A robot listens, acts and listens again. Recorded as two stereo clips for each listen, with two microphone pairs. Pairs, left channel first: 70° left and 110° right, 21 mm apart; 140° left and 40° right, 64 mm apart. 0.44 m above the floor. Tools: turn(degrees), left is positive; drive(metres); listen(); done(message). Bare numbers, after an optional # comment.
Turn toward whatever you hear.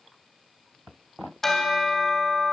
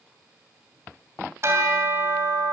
done("Facing the bell, 2 to 4 m away.")